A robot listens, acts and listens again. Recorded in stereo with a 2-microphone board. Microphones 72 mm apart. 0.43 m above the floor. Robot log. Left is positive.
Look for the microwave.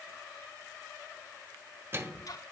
note: The microwave: about 35° right or 145° right.
cmd yaw -35
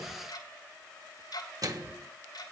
note: So it is at 105° right.
cmd yaw -105
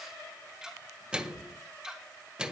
note: The microwave is now 15° right.
cmd yaw -15
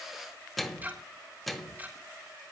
end: Found it: a microwave, straight ahead, 1 to 2 m away.